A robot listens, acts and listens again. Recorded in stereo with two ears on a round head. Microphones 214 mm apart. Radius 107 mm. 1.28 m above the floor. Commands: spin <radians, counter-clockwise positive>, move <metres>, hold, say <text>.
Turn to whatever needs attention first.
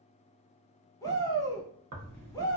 spin 0.52
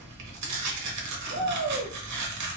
spin 2.36
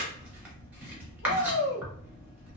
spin 1.05
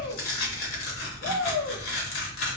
say Found it: a shout, straight ahead, under 1 m away.